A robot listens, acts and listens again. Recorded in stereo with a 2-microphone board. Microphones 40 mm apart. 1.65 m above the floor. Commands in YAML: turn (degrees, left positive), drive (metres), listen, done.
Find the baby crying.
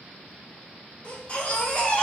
turn: 30
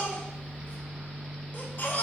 turn: 115
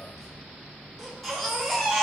done: "Facing the baby crying, 1 to 2 m away."